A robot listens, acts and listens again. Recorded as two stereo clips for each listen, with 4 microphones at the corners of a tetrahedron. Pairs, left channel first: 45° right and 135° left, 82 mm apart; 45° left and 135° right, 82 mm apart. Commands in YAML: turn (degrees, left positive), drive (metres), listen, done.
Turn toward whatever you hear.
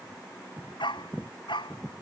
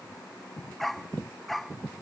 turn: -45
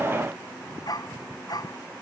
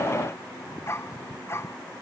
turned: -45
turn: -10
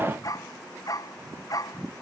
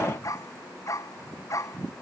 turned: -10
done: "Facing the dog barking."